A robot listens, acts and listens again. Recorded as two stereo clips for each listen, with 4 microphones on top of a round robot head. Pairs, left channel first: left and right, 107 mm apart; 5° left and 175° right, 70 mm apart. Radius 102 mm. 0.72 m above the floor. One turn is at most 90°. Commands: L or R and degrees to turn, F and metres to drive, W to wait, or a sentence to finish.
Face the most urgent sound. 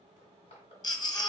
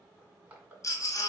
L40
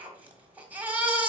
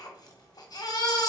R15
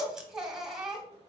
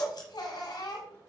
Facing the baby crying, 1 to 2 m away.